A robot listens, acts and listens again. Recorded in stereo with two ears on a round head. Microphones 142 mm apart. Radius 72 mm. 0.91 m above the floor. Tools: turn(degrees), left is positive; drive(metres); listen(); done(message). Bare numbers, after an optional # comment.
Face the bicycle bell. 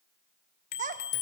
# The bicycle bell: about 60° left or 120° left.
turn(60)
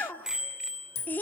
done("Facing the bicycle bell.")